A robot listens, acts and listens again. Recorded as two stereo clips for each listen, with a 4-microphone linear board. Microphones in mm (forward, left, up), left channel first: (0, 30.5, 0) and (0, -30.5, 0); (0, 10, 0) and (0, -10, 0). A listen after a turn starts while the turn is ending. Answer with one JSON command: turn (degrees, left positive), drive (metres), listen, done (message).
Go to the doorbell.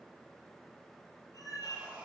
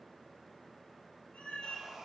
{"listen": true}
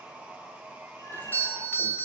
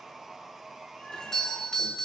{"turn": 35}
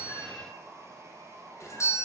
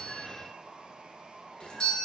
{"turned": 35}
{"turn": 105}
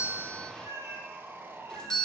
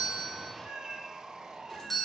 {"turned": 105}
{"turn": 15}
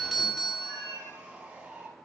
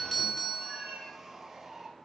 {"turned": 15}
{"drive": 1.0}
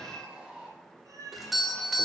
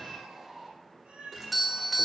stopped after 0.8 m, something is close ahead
{"done": "I am next to the doorbell."}